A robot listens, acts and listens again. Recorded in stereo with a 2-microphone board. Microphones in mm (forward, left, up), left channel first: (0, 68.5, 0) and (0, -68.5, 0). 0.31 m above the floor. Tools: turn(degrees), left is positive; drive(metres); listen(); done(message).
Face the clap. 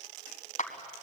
turn(degrees=65)
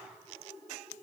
listen()
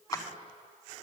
turn(degrees=30)
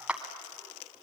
turn(degrees=-10)
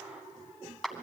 done("Facing the clap.")